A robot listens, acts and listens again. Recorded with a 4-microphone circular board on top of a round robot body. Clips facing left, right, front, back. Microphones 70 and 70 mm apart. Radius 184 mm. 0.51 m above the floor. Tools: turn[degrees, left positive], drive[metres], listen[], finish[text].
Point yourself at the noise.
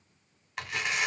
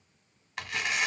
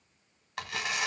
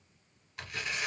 Action: finish[Facing the tearing paper, 1 to 2 m away.]